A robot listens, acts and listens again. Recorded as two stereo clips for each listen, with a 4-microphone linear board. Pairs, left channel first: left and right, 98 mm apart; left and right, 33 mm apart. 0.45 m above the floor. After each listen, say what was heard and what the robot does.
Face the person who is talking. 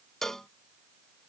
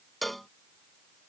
Keep listening.
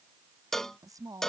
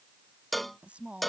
The woman speaking: about 35° right or 145° right. Turn 35° right.
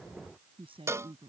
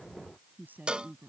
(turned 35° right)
So it is at 110° right. Turn 110° right.
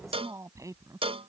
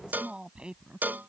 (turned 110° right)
The woman speaking is now 35° right. Turn 35° right.
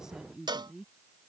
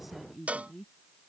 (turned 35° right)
Found it: a woman speaking, straight ahead.